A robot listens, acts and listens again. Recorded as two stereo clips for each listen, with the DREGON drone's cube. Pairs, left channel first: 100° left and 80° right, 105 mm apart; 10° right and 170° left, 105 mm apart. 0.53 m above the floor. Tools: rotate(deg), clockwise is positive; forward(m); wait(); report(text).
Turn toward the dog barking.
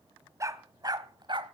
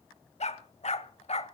rotate(35)
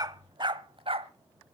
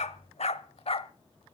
rotate(45)
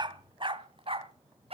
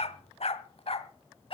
rotate(45)
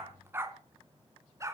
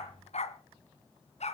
rotate(15)
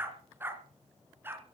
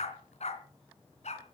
report("Found it: a dog barking, straight ahead, 2 to 4 m away.")